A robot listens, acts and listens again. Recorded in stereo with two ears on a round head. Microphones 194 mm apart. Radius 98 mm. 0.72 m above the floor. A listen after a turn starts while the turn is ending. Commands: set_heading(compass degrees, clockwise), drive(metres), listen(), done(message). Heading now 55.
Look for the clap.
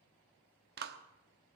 set_heading(105)
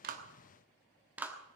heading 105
set_heading(115)
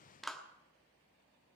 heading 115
done("Facing the clap, 1 to 2 m away.")